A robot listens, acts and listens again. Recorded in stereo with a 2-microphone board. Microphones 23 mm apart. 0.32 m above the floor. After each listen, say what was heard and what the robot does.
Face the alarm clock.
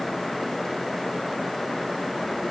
Keep listening.
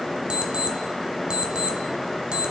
The alarm clock: about 50° right or 130° right. Turn 50° right.
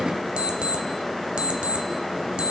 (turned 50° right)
So it is at 75° right. Turn 75° right.
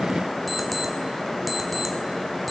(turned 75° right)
Keep listening.
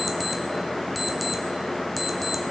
Found it: an alarm clock, straight ahead.